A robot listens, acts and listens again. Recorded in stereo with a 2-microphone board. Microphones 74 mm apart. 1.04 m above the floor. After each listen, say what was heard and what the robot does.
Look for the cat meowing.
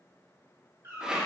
The cat meowing: about 40° right or 140° right. Turn 40° right.
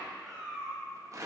So it is at 10° left. Turn 10° left.
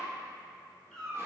The cat meowing is now 10° left. Turn 10° left.
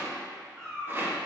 The cat meowing is now 10° left. Turn 10° left.
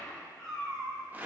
The cat meowing is now 10° left. Turn 10° left.
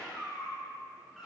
Found it: a cat meowing, straight ahead.